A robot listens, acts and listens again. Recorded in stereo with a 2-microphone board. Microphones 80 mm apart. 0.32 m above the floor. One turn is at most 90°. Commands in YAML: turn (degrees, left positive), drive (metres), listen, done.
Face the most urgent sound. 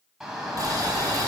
turn: -30
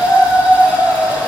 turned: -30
turn: 20
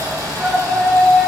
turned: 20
done: "Facing the shout, 2 to 4 m away."